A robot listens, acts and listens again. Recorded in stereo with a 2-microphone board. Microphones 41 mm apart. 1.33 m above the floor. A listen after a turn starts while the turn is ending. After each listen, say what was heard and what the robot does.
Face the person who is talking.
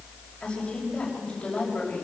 The woman speaking: about 25° left or 155° left. Turn 25° left.
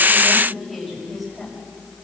Facing the woman speaking.